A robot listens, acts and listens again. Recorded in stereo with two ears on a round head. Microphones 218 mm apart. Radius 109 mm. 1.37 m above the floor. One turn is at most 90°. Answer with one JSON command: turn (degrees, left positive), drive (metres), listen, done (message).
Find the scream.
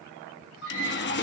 {"turn": 50}
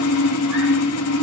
{"listen": true}
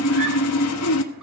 {"listen": true}
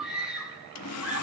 {"done": "Facing the scream."}